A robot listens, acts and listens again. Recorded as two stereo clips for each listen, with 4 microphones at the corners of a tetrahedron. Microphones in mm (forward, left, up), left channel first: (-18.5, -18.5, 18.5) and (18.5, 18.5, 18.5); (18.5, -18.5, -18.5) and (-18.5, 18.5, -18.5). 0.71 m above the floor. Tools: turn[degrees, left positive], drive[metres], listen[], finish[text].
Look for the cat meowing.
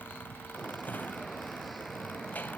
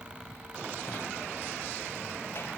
Action: listen[]
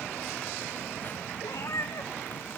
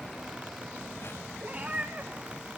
Thought: The cat meowing: 165° right.
Action: turn[-165]
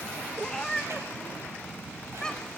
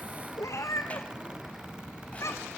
Thought: The cat meowing is now 60° right.
Action: turn[-60]
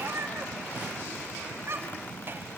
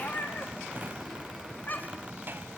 Thought: The cat meowing is now 10° left.
Action: turn[10]
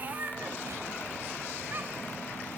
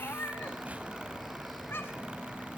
Action: finish[Facing the cat meowing.]